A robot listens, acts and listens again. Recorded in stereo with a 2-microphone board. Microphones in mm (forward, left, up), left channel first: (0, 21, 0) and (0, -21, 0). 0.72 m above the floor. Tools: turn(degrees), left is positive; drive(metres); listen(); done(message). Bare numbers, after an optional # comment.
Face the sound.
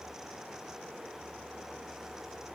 listen()
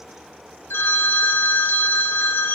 turn(90)
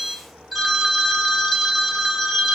done("Facing the phone ringing.")